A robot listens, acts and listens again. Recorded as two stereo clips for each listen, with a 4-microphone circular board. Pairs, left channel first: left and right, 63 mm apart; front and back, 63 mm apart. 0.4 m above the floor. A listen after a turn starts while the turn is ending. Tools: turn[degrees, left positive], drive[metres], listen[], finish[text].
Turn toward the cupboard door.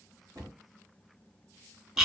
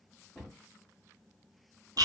Thought: The cupboard door: 75° right.
Action: turn[-75]
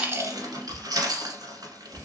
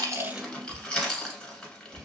Thought: The cupboard door is now 20° left.
Action: turn[20]
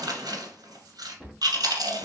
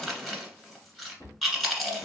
Thought: The cupboard door is now 10° left.
Action: turn[10]
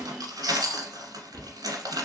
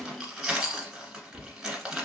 Action: finish[Facing the cupboard door, 2 to 4 m away.]